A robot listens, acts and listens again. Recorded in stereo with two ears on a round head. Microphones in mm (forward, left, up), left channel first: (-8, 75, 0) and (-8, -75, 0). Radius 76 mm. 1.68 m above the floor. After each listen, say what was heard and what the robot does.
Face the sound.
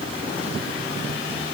Keep listening.
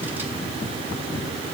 Keep listening.
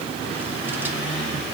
I can't make out anything.